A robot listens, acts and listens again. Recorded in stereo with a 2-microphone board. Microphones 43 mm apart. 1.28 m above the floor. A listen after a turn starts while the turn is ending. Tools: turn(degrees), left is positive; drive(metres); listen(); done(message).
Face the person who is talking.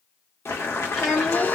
turn(degrees=30)
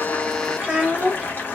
turn(degrees=-25)
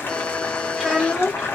turn(degrees=-10)
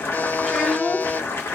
done("Found it: a child speaking, straight ahead.")